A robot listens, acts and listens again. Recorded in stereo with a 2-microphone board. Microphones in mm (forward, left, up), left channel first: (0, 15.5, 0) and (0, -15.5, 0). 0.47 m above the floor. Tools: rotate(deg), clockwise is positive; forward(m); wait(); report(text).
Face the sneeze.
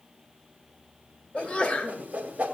rotate(-30)
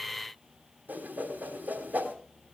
wait()
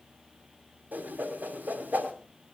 report("I heard a sneeze, but can't make it out now. It was about straight ahead or 120° left.")